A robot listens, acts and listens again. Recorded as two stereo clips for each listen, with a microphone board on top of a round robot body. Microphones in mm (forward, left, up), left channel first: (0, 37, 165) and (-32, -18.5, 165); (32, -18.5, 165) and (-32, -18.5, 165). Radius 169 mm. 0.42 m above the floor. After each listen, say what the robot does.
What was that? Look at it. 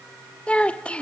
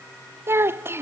Turn 130° left.
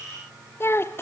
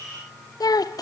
Turn 10° left.
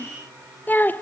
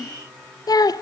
Facing the child speaking.